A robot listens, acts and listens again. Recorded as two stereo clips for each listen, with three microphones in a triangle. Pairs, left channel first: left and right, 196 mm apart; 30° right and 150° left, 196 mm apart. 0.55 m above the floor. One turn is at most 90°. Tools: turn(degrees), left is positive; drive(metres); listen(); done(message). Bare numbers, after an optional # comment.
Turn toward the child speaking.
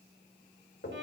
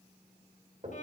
listen()
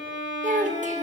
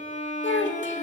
# The child speaking: 40° right.
turn(-40)
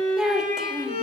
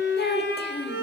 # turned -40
done("Facing the child speaking, 1 to 2 m away.")